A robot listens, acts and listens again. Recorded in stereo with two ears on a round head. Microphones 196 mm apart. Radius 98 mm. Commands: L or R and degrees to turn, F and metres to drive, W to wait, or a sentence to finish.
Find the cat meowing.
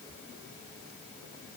W
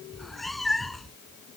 L30
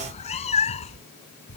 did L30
L150
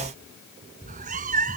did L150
R40
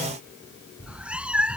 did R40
Found it: a cat meowing, straight ahead.